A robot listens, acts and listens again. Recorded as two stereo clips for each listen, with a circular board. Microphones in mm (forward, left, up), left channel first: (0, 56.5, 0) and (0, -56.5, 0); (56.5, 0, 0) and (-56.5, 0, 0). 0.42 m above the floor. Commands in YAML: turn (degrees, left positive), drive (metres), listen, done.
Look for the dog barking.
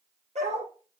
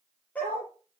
turn: -80
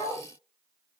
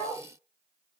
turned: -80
turn: -25
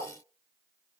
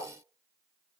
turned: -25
turn: -15
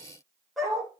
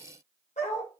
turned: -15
done: "Found it: a dog barking, straight ahead, over 4 m away."